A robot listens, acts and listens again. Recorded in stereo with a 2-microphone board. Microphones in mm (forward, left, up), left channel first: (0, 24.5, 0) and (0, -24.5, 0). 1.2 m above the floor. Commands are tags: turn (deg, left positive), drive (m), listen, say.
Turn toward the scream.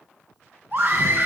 <turn deg="-40"/>
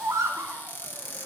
<turn deg="-100"/>
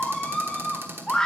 <turn deg="15"/>
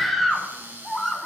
<say>Found it: a scream, straight ahead.</say>